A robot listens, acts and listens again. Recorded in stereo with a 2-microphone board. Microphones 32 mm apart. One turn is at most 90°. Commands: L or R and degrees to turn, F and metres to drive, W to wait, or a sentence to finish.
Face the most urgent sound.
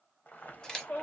L65
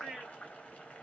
Facing the shout, 2 to 4 m away.